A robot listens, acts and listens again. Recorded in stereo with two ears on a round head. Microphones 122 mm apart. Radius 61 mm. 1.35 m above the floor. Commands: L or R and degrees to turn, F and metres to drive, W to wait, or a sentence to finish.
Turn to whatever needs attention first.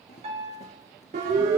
R60
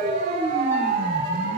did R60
R60
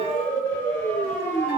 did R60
L15
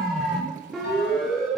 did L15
Facing the siren.